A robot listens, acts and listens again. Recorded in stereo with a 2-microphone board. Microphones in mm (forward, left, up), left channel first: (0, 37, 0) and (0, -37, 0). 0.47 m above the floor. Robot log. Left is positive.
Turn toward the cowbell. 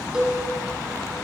cmd yaw -30
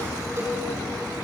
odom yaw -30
cmd idle
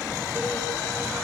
cmd idle
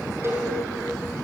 note: So it is at 145° right.
cmd yaw -145
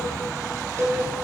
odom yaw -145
note: The cowbell is now 40° right.
cmd yaw -40
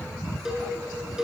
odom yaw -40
note: The cowbell is now 10° right.
cmd yaw -10
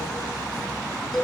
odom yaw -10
end: Found it: a cowbell, straight ahead.